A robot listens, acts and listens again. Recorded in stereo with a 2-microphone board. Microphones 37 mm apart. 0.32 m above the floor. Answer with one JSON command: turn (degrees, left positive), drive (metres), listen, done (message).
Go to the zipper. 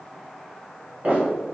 {"turn": -60}
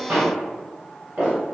{"turn": -55}
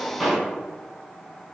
{"drive": 1.0}
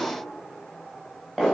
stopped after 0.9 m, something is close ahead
{"done": "I am next to the zipper."}